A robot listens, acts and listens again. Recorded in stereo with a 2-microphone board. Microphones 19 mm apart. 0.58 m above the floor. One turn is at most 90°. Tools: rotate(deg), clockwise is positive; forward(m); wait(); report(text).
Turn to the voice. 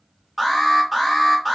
wait()
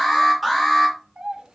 rotate(75)
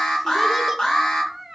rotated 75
rotate(15)
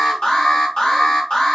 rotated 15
wait()
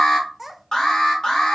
report("Facing the child speaking.")